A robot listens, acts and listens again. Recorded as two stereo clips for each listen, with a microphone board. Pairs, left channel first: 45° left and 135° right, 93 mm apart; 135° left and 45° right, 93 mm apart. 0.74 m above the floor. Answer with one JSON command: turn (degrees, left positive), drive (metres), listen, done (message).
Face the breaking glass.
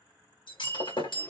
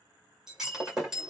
{"turn": 40}
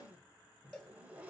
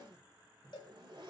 {"done": "I heard breaking glass from this way, but can't make it out now."}